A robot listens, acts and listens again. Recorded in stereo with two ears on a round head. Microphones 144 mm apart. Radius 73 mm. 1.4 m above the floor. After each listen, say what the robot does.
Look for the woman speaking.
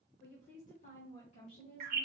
Turn 40° left.
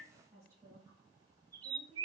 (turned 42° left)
Turn 30° right.
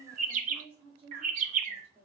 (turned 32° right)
Turn 20° right.
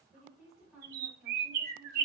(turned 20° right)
Found it: a woman speaking, straight ahead, 2 to 4 m away.